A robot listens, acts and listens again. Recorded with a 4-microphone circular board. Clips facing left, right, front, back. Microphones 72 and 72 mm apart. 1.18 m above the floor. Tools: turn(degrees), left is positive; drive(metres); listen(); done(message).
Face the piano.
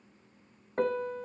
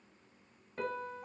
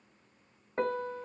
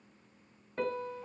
turn(degrees=55)
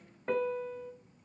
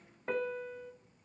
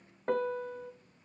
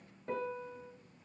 done("Facing the piano.")